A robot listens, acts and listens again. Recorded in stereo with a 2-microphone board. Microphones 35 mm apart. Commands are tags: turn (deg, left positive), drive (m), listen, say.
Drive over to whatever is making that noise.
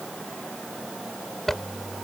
<turn deg="30"/>
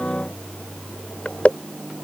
<turn deg="140"/>
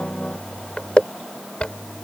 <turn deg="35"/>
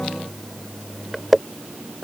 <drive m="1.0"/>
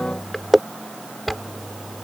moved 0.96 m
<drive m="1.0"/>
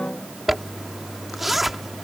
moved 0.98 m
<drive m="1.0"/>
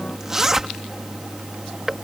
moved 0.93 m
<turn deg="-15"/>
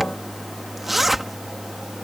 <drive m="1.0"/>
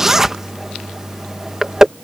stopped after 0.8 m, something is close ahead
<turn deg="-15"/>
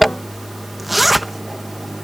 <say>I am next to the zipper.</say>